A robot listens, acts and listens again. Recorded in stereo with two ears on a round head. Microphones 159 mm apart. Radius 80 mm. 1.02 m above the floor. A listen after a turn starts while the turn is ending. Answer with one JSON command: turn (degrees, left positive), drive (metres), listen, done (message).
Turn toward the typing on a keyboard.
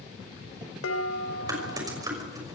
{"turn": -20}
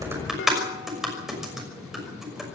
{"done": "Found it: typing on a keyboard, straight ahead, over 4 m away."}